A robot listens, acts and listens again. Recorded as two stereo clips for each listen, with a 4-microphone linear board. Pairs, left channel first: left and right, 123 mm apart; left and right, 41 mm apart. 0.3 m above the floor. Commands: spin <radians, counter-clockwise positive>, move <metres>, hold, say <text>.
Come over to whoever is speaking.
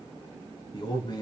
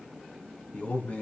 spin 0.70
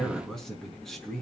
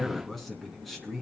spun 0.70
move 1.0
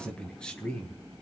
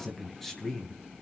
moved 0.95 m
spin 0.17
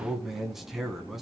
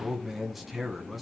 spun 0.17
move 1.0
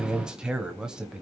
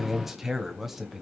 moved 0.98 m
spin -0.17
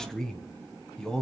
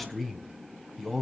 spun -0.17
move 1.0
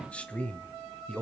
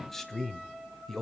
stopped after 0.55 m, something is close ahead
spin 0.26
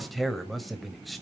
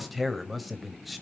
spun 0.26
say Arrived at the man speaking, straight ahead.